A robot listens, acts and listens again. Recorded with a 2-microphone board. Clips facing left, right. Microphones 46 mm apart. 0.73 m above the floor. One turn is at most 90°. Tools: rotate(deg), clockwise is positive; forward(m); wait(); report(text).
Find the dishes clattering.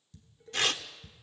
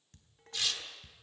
rotate(55)
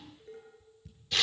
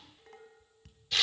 rotate(70)
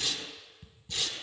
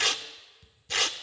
rotate(-25)
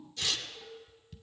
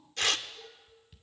rotate(10)
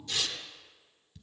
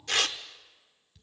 report("Facing the dishes clattering, 2 to 4 m away.")